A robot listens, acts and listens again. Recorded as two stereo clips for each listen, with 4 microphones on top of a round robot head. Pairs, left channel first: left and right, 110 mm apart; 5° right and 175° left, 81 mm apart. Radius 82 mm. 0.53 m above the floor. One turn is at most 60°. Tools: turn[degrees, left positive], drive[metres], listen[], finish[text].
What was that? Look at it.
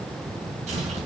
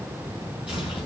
Thought: The tearing paper: 100° right.
Action: turn[-60]
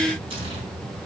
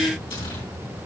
Thought: The tearing paper is now 45° right.
Action: turn[-45]
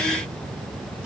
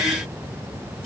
Action: listen[]
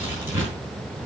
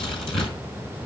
Thought: The tearing paper is now 15° right.
Action: turn[-15]
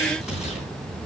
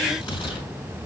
Action: finish[Found it: tearing paper, straight ahead.]